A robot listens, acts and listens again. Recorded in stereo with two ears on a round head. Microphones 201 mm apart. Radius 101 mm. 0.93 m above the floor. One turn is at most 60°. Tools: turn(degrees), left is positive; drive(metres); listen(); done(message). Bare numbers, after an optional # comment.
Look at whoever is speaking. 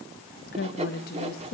# The woman speaking: about 40° left or 140° left.
turn(40)
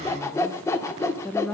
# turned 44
done("Found it: a woman speaking, straight ahead, under 1 m away.")